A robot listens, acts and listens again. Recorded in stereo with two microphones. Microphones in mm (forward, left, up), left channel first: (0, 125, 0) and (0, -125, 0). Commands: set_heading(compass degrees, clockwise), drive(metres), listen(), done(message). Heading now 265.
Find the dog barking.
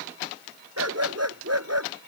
set_heading(355)
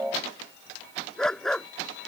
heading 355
done("Facing the dog barking.")